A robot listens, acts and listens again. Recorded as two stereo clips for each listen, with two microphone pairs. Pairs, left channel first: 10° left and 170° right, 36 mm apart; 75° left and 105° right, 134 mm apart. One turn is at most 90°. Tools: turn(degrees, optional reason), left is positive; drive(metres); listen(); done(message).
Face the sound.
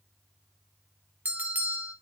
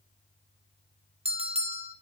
turn(degrees=-90, reason="The bell: 140° right.")
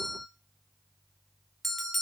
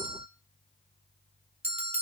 turn(degrees=-75, reason="The bell is now 75° right.")
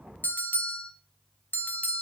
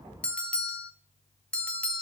done("Facing the bell, 1 to 2 m away.")